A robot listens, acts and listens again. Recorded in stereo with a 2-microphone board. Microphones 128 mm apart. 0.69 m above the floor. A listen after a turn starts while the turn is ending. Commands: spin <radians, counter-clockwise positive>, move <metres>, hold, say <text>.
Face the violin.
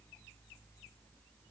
hold
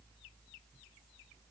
hold
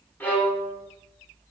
spin 0.52
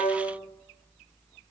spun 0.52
spin -0.26
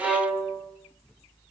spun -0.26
say Facing the violin.